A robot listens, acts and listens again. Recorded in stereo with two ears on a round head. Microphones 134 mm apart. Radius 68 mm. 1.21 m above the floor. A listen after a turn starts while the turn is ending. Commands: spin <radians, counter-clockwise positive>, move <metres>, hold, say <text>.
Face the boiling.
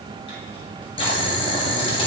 spin 0.79
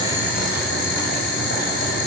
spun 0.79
spin 1.48
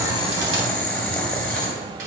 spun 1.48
say Facing the boiling.